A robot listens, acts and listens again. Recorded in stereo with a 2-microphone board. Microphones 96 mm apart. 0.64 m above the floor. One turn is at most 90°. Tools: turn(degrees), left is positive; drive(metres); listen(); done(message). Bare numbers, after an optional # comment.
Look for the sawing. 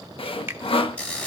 # The sawing: about 65° left or 115° left.
turn(65)
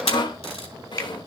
# So it is at 50° left.
turn(50)
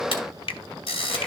listen()
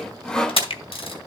done("Found it: sawing, straight ahead.")